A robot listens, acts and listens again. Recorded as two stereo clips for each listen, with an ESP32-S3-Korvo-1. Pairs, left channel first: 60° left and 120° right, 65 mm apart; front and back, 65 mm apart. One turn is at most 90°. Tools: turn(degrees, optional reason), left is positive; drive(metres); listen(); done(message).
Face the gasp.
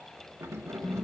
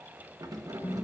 listen()
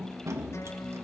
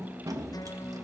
listen()
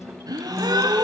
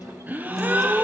turn(degrees=-90, reason="The gasp: 115° right.")
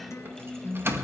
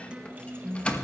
turn(degrees=-25, reason="Nothing new. It was at 25° right.")
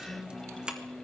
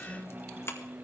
done("Facing where the gasp came from. I can't hear it now.")